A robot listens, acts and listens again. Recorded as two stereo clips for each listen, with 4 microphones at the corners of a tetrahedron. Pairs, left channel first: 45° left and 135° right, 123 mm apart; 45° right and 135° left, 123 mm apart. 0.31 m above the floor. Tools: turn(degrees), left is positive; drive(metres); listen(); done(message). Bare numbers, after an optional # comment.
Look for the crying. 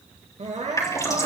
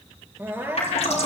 # The crying: 155° right.
turn(-155)
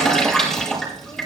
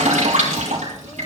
listen()
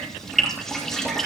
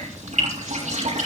listen()
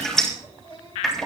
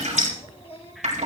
done("Facing the crying, 2 to 4 m away.")